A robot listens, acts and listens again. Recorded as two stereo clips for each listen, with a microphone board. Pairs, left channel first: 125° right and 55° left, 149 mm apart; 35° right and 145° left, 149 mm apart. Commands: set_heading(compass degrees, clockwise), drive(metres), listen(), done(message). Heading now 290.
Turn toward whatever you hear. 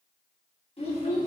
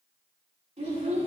set_heading(95)
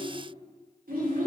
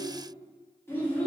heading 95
set_heading(50)
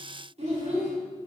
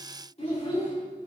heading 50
set_heading(35)
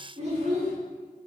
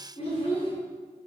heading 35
set_heading(20)
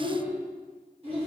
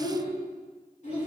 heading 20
done("Facing the child speaking.")